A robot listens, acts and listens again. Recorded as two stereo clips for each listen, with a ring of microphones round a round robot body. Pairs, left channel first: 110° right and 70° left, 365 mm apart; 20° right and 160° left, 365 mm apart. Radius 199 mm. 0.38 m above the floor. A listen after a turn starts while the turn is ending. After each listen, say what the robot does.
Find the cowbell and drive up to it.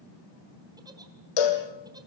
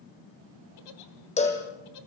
Turn 95° right.
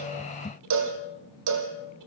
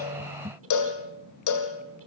Turn 20° left.
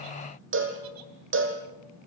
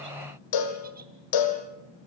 Turn 10° left.
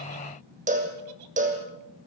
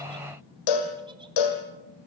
Drive 1.0 m forward.
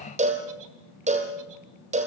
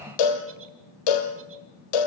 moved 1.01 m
Drive 1.0 m forward.
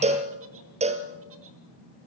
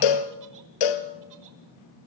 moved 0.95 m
Drive 1.0 m forward.
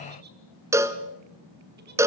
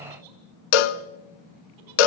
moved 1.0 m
Turn 15° right.
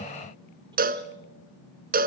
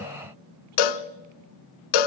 Drive 1.0 m forward.
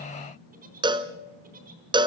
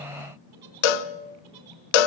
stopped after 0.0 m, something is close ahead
Turn 10° right.
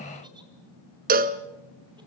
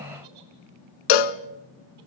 Arrived at the cowbell, straight ahead.